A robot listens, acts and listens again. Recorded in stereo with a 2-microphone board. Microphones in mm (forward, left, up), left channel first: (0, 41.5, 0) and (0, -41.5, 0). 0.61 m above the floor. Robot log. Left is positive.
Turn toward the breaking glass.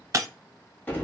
note: The breaking glass: about 40° right or 140° right.
cmd yaw -40
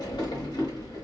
cmd idle
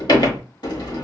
end: I heard breaking glass, but can't make it out now. It was about straight ahead or 100° right.